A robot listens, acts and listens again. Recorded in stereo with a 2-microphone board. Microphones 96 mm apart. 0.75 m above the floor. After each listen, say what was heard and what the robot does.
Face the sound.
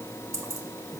The keys jangling: about 35° right or 145° right. Turn 35° right.
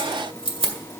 So it is at 110° right. Turn 110° right.
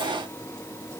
Keep listening.
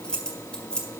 The keys jangling is now 10° left. Turn 10° left.
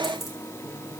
Facing the keys jangling.